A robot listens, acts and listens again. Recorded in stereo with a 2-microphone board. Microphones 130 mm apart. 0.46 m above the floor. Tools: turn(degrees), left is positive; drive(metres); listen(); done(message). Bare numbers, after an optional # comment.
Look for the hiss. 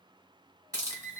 # The hiss: about 25° right or 155° right.
turn(-25)
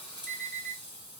# So it is at 10° right.
turn(-10)
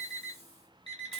listen()
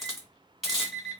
done("Facing the hiss.")